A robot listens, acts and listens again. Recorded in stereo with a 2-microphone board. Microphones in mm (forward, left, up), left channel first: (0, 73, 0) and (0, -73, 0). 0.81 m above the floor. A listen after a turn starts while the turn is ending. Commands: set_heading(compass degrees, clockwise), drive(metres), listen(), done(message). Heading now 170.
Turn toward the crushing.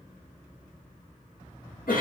listen()
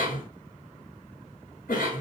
listen()
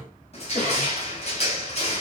set_heading(125)
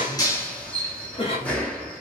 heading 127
set_heading(117)
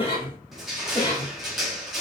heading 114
done("Facing the crushing.")